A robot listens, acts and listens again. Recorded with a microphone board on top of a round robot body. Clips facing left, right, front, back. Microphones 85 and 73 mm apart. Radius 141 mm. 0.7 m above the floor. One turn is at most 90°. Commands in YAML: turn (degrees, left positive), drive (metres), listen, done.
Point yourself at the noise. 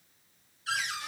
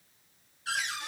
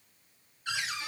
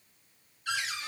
turn: -60
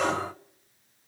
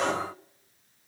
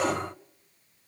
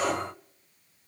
done: "Found it: a cupboard door, straight ahead, 2 to 4 m away."